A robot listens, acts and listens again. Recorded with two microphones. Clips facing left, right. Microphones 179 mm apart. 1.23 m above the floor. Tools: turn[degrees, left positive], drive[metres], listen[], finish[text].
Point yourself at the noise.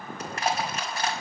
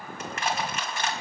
Thought: The crushing: about 35° left or 145° left.
Action: turn[35]
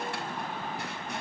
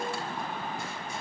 Action: listen[]
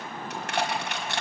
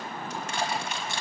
Thought: So it is at 110° left.
Action: turn[110]
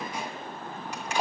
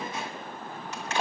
Thought: The crushing is now 10° left.
Action: turn[10]
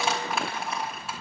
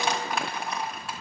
Action: finish[Facing the crushing.]